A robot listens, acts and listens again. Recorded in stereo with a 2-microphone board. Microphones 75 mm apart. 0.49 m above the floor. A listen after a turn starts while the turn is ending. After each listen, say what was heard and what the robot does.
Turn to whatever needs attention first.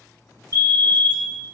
The fire alarm: about 60° right or 120° right. Turn 60° right.
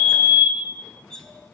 So it is at 25° right. Turn 25° right.
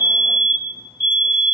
Found it: a fire alarm, straight ahead.